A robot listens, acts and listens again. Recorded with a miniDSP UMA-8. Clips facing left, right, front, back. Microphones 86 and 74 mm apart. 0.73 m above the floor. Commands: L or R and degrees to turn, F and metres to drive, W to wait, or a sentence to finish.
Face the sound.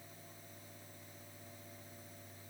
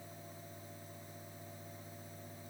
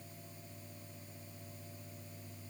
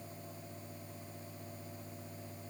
W
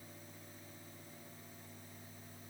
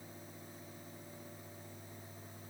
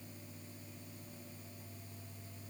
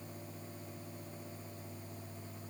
W
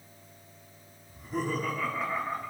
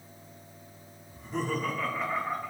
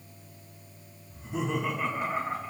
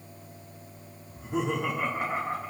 L180
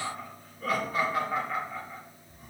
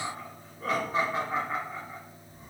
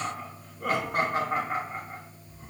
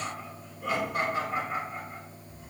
R30
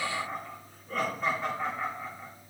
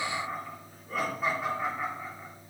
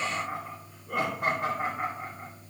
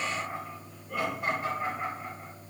R10
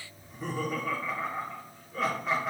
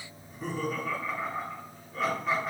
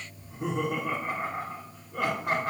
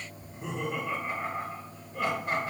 Found it: laughter, straight ahead, 1 to 2 m away.